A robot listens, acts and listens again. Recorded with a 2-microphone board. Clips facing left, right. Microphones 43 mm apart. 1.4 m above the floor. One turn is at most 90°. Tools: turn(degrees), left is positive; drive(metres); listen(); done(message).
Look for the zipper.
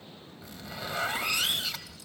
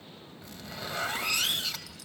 turn(degrees=30)
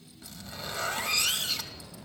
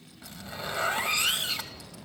turn(degrees=-25)
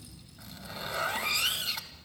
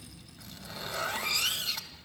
done("Found it: a zipper, straight ahead.")